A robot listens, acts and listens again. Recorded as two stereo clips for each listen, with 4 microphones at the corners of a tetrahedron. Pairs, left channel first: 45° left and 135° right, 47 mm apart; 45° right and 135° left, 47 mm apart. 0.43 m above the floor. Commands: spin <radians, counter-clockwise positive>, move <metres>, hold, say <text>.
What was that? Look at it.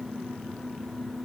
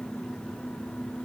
hold
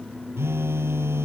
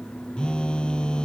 spin -2.01
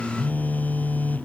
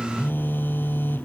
say Found it: a phone buzzing, straight ahead.